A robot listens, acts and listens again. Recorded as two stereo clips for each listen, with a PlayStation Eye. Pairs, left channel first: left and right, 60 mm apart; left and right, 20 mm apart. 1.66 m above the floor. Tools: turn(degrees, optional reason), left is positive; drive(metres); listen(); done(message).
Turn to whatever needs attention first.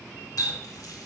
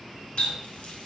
listen()
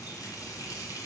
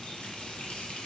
listen()
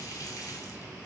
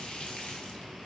done("I can't make out anything urgent, only a running tap.")